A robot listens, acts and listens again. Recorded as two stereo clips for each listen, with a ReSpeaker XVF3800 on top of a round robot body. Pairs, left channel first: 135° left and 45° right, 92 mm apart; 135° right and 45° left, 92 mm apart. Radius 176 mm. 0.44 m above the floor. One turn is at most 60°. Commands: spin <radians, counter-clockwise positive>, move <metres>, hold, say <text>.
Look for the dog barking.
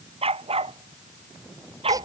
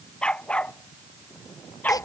spin -1.05
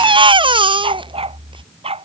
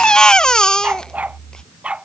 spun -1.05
spin -0.61
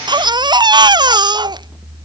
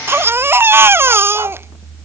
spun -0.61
hold
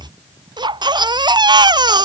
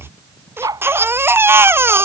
say Facing the dog barking.